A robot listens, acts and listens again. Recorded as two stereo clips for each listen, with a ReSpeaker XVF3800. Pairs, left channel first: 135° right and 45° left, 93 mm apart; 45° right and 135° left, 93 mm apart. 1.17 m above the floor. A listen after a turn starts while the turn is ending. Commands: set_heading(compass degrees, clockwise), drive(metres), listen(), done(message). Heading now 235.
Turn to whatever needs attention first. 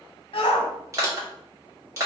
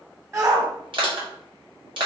set_heading(40)
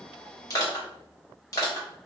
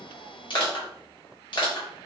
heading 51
set_heading(41)
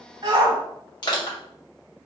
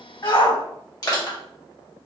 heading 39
done("Facing the shout.")